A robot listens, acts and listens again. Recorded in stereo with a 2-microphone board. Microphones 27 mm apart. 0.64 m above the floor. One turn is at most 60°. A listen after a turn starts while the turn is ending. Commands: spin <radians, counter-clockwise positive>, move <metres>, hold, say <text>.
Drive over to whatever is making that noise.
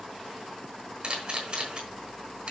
spin -0.87
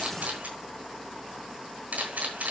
spin -1.05
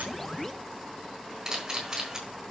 spin -0.35
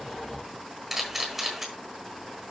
move 1.0
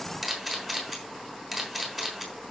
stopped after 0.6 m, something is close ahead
say Blocked. The camera shutter is further on, straight ahead.